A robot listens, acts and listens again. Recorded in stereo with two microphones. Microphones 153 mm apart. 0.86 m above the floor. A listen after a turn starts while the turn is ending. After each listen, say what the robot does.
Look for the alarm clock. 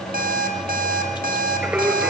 Turn 70° right.
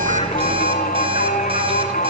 Keep listening.
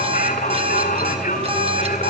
Turn 35° right.
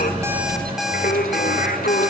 Found it: an alarm clock, straight ahead, 2 to 4 m away.